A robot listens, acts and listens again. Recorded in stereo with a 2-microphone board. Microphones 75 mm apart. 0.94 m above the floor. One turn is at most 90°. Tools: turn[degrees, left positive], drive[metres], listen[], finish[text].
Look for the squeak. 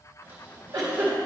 Thought: The squeak: about 30° right or 150° right.
Action: turn[-30]
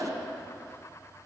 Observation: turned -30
Action: listen[]
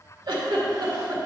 Action: listen[]
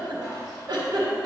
Action: finish[I heard a squeak, but can't make it out now. It was about straight ahead or 120° right.]